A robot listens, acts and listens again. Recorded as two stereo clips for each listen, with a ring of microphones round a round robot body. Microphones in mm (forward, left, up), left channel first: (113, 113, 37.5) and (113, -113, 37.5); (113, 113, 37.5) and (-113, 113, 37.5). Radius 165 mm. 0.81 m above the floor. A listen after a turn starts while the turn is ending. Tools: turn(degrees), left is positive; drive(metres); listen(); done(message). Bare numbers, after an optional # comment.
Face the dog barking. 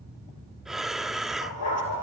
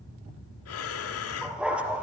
# The dog barking: 95° left.
turn(95)
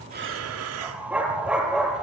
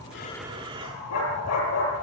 done("Found it: a dog barking, straight ahead.")